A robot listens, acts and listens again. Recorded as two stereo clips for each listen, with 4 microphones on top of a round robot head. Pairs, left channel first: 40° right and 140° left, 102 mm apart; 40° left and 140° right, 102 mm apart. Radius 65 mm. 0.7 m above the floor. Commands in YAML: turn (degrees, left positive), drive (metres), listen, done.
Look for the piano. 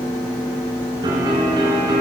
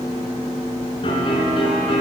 turn: 85
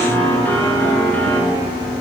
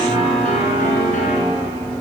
turn: 35
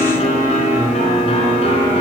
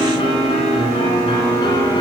done: "Facing the piano."